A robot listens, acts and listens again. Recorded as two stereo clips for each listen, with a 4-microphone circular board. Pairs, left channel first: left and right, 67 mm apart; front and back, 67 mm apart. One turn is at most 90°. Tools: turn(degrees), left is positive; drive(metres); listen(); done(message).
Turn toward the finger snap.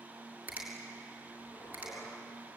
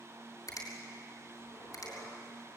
turn(degrees=-25)
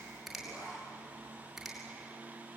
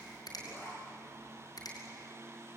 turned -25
done("Facing the finger snap, over 4 m away.")